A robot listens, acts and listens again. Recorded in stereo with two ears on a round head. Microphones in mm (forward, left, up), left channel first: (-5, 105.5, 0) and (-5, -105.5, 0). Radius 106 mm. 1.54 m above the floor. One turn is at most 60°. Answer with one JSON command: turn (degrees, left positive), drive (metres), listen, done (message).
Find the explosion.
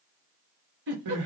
{"listen": true}
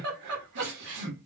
{"listen": true}
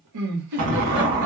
{"turn": -55}
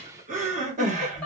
{"listen": true}
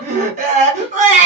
{"done": "I heard an explosion, but can't make it out now. It was about straight ahead or 70° right."}